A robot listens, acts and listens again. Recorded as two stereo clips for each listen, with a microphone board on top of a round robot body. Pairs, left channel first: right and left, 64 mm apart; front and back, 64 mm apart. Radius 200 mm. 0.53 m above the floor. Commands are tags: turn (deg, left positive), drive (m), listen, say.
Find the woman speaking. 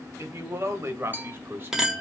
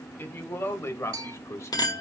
<turn deg="35"/>
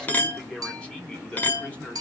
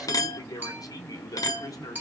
<turn deg="-20"/>
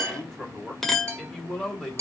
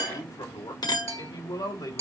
<turn deg="-10"/>
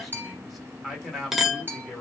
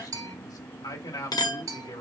<say>Facing the woman speaking.</say>